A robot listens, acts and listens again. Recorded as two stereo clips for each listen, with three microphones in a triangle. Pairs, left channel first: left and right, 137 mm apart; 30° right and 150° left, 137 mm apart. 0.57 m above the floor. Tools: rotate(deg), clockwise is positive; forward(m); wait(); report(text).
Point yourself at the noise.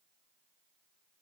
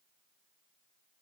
wait()
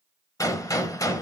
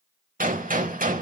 rotate(-155)
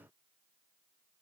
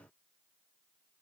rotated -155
report("I heard a gunshot from this way, but can't make it out now.")